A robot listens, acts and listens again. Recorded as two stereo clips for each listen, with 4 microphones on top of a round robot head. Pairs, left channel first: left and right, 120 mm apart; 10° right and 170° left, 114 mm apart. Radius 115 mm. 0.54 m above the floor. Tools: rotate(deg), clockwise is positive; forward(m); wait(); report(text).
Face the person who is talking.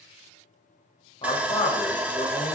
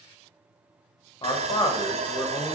rotate(-40)
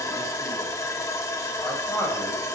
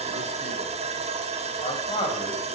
rotate(-20)
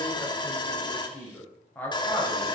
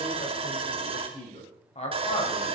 rotate(-15)
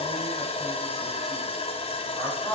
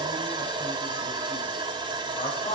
report("Found it: a man speaking, straight ahead.")